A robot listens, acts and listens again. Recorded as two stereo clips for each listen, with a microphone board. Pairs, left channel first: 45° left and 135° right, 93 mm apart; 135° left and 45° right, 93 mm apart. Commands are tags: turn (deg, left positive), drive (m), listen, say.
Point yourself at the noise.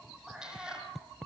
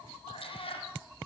<turn deg="145"/>
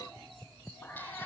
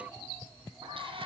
<turn deg="-25"/>
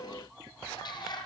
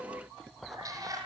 <say>Found it: a cat meowing, straight ahead.</say>